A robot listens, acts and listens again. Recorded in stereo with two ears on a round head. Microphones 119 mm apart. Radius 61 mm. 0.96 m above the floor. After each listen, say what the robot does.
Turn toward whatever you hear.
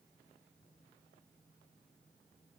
Keep listening.
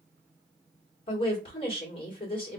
Turn 40° left.
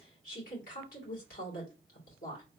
Turn 95° left.
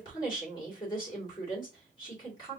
Turn 35° left.
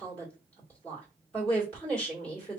Turn 15° left.
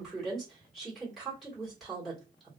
Found it: a woman speaking, straight ahead.